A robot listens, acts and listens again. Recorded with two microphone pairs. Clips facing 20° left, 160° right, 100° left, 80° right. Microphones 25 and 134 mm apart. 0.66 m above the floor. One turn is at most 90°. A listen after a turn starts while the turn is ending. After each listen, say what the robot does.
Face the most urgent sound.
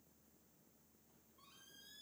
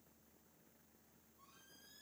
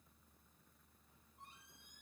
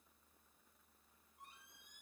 Keep listening.
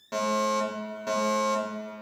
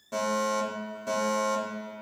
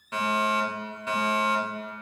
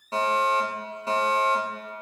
Turn 30° right.
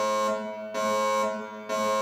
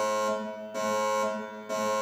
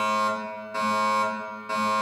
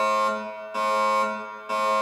Facing the fire alarm.